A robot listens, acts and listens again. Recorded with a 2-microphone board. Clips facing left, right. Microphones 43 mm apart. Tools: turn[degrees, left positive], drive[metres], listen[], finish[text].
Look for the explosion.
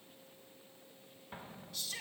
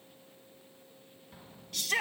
Thought: The explosion: about 40° left or 140° left.
Action: turn[40]
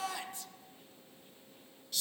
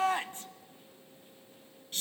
Action: listen[]
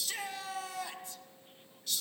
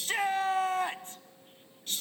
Action: finish[I heard an explosion, but can't make it out now. It was about straight ahead or 100° left.]